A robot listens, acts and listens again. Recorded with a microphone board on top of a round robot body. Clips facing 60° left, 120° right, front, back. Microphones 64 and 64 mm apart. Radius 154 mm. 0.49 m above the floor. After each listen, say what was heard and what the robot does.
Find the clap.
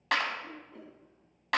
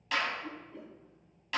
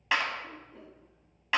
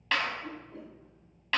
The clap: 75° left. Turn 75° left.
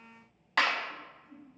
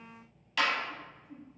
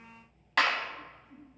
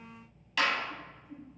The clap is now 30° left. Turn 30° left.
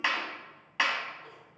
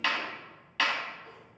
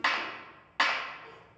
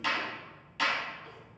The clap is now 10° right. Turn 10° right.
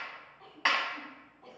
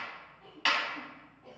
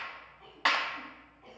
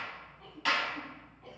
Found it: a clap, straight ahead, 1 to 2 m away.